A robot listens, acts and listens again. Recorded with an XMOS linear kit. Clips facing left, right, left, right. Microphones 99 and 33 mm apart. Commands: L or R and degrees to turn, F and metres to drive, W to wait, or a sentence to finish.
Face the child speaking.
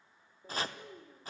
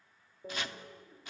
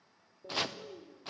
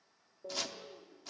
L40
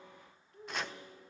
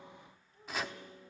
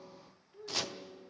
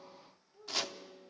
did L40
L110
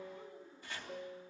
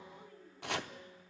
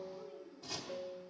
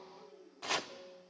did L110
L20
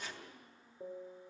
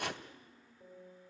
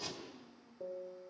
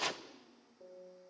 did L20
Facing the child speaking, over 4 m away.